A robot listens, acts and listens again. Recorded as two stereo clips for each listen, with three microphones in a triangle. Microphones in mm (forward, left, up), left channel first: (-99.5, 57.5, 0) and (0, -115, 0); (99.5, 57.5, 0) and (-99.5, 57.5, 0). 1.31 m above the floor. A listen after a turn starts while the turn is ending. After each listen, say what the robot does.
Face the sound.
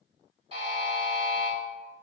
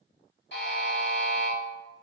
Facing the buzzer, 1 to 2 m away.